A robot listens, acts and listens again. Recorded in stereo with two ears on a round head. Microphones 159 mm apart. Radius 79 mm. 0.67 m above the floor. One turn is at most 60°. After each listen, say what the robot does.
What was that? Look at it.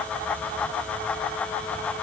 Keep listening.
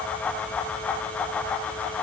Keep listening.
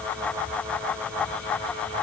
I can't make out anything to turn to.